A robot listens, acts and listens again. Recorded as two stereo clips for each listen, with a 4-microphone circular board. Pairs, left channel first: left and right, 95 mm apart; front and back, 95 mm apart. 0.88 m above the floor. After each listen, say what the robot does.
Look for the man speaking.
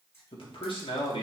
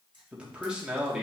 Turn 95° left.
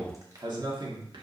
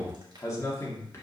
Turn 60° right.
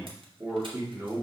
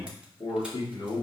Turn 30° right.
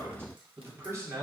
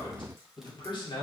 Turn 35° right.
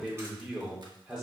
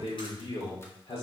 Found it: a man speaking, straight ahead.